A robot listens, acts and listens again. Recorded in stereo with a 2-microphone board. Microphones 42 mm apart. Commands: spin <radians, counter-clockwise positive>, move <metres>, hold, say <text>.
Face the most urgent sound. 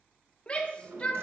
spin 0.44
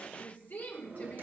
spin 2.27
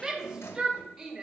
spin -0.17
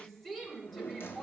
say Facing the shout, 1 to 2 m away.